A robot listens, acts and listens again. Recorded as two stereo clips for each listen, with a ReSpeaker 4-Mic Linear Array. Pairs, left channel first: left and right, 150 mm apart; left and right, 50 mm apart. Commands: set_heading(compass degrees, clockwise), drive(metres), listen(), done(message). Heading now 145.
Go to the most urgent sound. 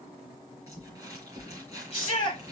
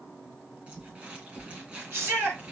set_heading(200)
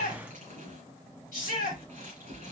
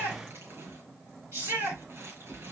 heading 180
set_heading(270)
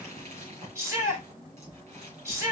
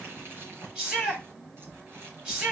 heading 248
set_heading(268)
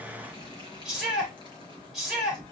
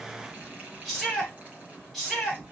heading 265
drive(1.0)
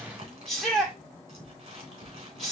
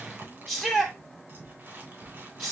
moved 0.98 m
drive(1.0)
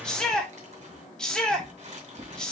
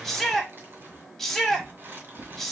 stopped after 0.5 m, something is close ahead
done("Arrived at the shout, straight ahead.")